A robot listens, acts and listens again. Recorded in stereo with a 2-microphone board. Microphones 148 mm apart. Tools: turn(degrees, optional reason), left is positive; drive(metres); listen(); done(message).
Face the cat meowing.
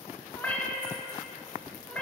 turn(degrees=30)
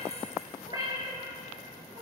turn(degrees=-25, reason="So it is at 25° right.")
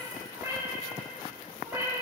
turn(degrees=-15, reason="The cat meowing is now 15° right.")
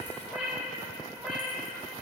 done("Found it: a cat meowing, straight ahead, over 4 m away.")